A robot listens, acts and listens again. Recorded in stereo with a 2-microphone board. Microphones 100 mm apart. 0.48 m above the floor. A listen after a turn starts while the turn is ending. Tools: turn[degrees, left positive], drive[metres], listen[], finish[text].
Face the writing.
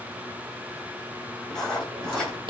Action: turn[30]
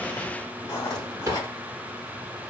Thought: So it is at 140° left.
Action: turn[140]
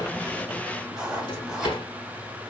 Thought: The writing is now 10° right.
Action: turn[-10]
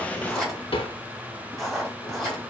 Action: finish[Facing the writing, 2 to 4 m away.]